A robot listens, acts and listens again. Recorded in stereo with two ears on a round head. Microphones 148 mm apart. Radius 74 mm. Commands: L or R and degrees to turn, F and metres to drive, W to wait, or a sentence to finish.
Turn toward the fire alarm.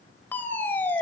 L30
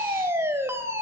R15
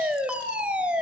Facing the fire alarm, over 4 m away.